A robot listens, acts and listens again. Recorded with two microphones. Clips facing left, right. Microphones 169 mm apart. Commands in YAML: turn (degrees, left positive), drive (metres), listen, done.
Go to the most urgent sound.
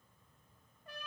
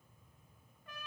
listen: true
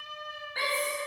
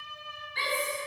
turn: 50
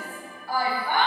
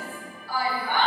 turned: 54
turn: 70
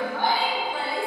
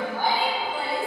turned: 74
drive: 1.0
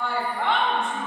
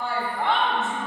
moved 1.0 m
drive: 1.0
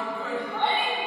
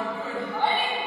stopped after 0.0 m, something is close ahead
done: "Arrived at the shout, straight ahead."